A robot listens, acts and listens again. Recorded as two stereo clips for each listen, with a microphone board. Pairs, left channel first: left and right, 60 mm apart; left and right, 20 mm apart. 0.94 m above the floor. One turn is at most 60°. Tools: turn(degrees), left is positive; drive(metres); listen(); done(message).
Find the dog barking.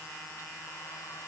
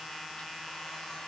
listen()
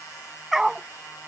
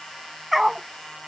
turn(degrees=-30)
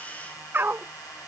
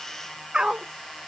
turn(degrees=-60)
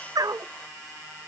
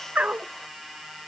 turn(degrees=-60)
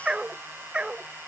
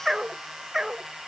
turn(degrees=-15)
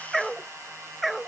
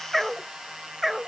done("Found it: a dog barking, straight ahead.")